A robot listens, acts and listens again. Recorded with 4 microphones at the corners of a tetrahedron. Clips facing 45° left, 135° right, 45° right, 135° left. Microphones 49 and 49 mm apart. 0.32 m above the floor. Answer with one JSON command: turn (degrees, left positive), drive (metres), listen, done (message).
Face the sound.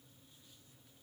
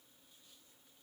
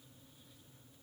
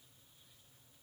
{"listen": true}
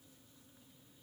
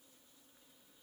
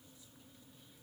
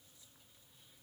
{"listen": true}
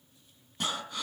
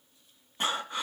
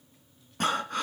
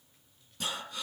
{"turn": -75}
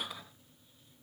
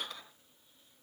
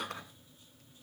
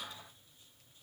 {"turn": -35}
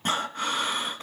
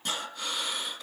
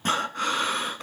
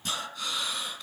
{"done": "Facing the breathing, 2 to 4 m away."}